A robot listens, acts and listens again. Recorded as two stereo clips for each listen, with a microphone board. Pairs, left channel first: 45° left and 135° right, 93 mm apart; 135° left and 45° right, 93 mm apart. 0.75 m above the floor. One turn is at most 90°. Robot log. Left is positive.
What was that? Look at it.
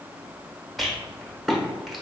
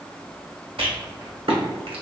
note: The rattle: 45° right.
cmd yaw -45
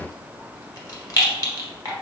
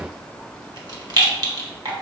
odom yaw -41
end: Facing the rattle, 1 to 2 m away.